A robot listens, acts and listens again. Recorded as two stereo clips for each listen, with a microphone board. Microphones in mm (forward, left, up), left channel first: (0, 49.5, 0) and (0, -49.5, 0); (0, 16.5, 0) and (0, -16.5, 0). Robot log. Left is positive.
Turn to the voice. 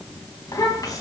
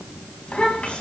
note: The child speaking: about 35° left or 145° left.
cmd yaw +35
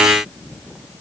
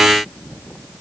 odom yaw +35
cmd idle
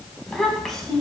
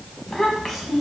end: Facing the child speaking, 2 to 4 m away.